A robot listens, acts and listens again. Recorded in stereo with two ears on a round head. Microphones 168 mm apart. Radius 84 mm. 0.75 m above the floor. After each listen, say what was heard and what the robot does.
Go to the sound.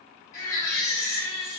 The baby crying: about 20° left or 160° left. Turn 20° left.
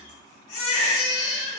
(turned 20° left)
So it is at 140° left. Turn 140° left.
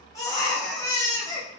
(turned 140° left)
The baby crying is now 20° left. Turn 20° left.
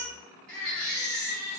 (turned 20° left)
Drive 1.0 m forward.
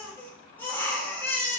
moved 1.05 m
The baby crying is now 10° left. Turn 10° left.
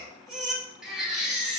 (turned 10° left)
Drive 1.0 m forward.
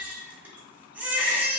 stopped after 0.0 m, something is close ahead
The baby crying is now 10° right. Turn 10° right.
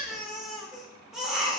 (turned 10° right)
Arrived at the baby crying, straight ahead.